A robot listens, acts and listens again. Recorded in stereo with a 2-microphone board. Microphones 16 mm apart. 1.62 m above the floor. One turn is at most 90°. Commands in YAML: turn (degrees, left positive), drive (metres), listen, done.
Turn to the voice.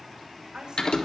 turn: -90
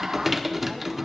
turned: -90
listen: true
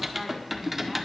listen: true
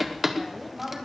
turn: 10
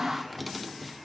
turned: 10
listen: true
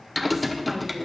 listen: true
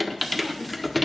done: "Facing where the woman speaking came from. I can't hear it now."